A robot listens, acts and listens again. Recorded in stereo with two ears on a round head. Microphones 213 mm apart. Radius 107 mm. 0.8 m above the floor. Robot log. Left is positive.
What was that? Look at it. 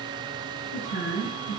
note: The woman speaking: about 60° left or 120° left.
cmd yaw +60
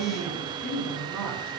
end: Found it: a woman speaking, straight ahead.